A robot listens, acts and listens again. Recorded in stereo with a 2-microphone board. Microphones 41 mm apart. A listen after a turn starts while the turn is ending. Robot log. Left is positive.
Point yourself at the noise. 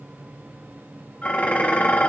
note: The dishes clattering: about 40° left or 140° left.
cmd yaw +40
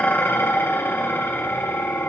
note: So it is at 100° left.
cmd yaw +100
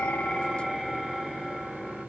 end: Found it: dishes clattering, straight ahead, 2 to 4 m away.